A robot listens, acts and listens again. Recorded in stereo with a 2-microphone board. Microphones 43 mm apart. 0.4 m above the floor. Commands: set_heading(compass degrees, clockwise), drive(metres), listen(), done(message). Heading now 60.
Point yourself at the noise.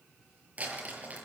set_heading(90)
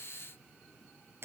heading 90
set_heading(205)
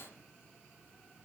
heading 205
listen()
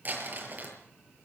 set_heading(250)
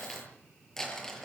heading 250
set_heading(240)
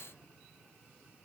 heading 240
listen()
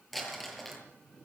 done("Facing the crumpling.")